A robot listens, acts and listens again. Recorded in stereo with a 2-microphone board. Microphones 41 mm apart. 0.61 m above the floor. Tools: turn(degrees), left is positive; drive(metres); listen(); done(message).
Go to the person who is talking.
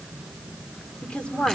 turn(degrees=30)
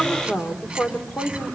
turn(degrees=115)
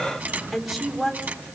drive(metres=1.0)
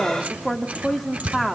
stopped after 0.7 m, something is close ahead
done("I am next to the woman speaking.")